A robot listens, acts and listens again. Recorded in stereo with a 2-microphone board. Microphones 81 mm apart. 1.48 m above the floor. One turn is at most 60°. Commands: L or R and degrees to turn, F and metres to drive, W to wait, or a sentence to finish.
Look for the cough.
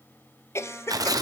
L35
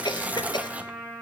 L60
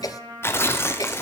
L55
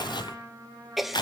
Facing the cough.